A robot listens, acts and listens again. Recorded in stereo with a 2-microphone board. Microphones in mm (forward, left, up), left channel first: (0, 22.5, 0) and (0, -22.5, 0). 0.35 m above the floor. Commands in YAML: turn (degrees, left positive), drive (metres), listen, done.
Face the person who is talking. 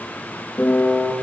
listen: true
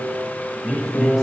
turn: -15
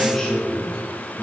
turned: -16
turn: 30
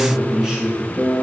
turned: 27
turn: -20
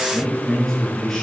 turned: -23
done: "Facing the man speaking, over 4 m away."